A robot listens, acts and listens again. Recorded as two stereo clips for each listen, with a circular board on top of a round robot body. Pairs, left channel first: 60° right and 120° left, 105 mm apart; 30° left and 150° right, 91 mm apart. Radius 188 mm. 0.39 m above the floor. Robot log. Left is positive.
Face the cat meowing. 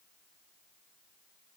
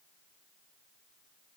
cmd idle
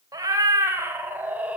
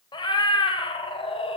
note: The cat meowing: 40° left.
cmd yaw +40
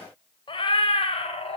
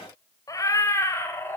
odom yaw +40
note: The cat meowing is now 35° right.
cmd yaw -35
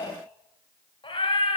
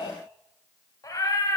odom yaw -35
note: The cat meowing is now 25° right.
cmd yaw -25
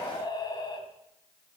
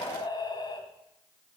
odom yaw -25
note: The cat meowing is now 10° right.
cmd yaw -10
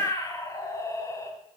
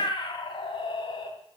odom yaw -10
end: Found it: a cat meowing, straight ahead.